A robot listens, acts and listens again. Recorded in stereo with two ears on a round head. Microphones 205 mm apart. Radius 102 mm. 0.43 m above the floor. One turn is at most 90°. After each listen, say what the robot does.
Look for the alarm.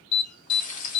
Turn 55° left.
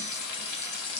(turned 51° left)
Keep listening.
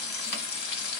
Keep listening.
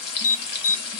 Turn 60° left.
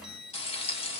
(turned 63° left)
Keep listening.
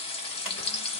Keep listening.
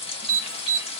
Facing the alarm, 2 to 4 m away.